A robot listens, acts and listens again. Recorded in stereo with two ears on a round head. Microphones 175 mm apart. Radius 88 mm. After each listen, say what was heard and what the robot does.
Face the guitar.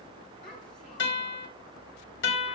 The guitar: about 70° left or 110° left. Turn 70° left.
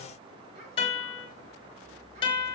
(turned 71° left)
So it is at 30° left. Turn 30° left.
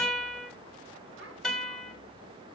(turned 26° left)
Facing the guitar, 2 to 4 m away.